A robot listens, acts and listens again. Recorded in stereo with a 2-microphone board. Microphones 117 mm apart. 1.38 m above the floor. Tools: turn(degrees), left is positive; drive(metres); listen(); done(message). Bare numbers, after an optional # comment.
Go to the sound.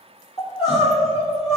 # The crying: about 55° left or 125° left.
turn(55)
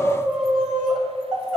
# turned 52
drive(1.0)
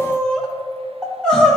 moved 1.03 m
drive(1.0)
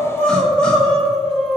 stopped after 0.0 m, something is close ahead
done("I am next to the crying.")